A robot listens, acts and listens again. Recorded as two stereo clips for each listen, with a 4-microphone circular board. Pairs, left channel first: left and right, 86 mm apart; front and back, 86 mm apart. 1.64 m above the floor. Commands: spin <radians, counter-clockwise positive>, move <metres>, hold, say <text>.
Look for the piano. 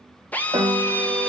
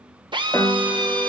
spin -1.22
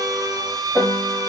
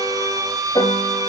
say Facing the piano.